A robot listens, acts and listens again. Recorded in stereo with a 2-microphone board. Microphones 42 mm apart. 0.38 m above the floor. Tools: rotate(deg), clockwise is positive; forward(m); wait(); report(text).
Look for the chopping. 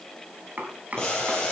rotate(40)
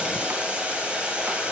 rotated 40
wait()
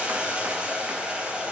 wait()
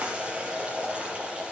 report("I heard chopping, but can't make it out now. It was about straight ahead or 100° right.")